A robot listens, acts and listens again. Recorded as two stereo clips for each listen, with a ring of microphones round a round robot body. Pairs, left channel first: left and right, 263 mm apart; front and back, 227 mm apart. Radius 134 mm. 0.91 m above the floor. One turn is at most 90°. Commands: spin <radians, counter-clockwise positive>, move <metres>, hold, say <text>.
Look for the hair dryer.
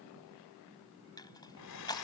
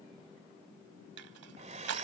spin 1.57
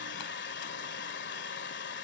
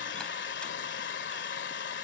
spin 0.70
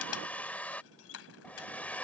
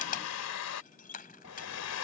say Facing the hair dryer.